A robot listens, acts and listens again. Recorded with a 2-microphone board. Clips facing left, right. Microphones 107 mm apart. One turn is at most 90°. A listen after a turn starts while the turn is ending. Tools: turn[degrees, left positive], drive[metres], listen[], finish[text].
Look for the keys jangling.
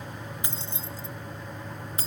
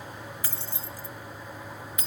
Thought: The keys jangling: about 35° left or 145° left.
Action: turn[35]
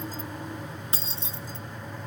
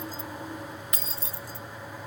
Thought: The keys jangling: about 25° left or 155° left.
Action: turn[25]
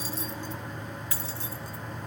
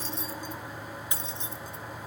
Thought: So it is at 25° right.
Action: turn[-25]
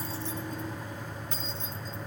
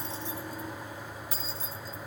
Thought: The keys jangling is now 10° right.
Action: turn[-10]
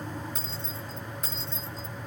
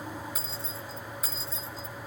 Action: finish[Facing the keys jangling.]